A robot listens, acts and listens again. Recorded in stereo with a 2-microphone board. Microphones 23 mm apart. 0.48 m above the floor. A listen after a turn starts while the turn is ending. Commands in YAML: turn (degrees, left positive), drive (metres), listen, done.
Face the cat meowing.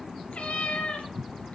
turn: 90
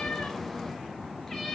listen: true
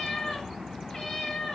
turn: 25
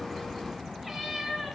done: "Facing the cat meowing, 2 to 4 m away."